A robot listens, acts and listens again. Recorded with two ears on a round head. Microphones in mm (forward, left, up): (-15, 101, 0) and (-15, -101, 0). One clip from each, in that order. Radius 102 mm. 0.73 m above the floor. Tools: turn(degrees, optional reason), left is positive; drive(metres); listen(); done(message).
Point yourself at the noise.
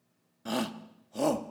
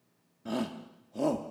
turn(degrees=35, reason="The shout: about 35° left or 145° left.")
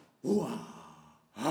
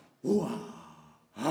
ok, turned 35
turn(degrees=10, reason="So it is at 10° left.")
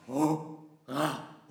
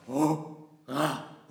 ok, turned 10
done("Facing the shout.")